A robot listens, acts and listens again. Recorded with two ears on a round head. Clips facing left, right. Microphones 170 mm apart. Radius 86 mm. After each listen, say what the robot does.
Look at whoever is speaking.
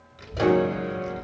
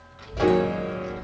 Turn 30° left.
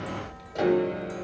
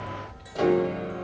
Turn 115° left.
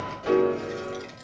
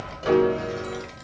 Found it: a child speaking, straight ahead, 1 to 2 m away.